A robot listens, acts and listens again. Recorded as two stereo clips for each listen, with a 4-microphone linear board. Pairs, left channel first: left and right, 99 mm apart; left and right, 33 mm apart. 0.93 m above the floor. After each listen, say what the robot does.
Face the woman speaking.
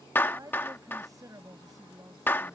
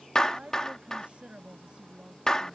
Turn 35° right.
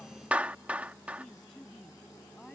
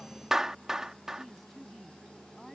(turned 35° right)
Found it: a woman speaking, straight ahead.